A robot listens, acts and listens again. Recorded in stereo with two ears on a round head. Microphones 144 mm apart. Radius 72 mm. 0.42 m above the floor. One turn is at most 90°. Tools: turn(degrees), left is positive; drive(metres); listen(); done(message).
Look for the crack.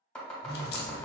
turn(degrees=70)
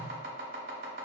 listen()
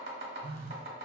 done("I heard a crack, but can't make it out now. It was about straight ahead or 40° left.")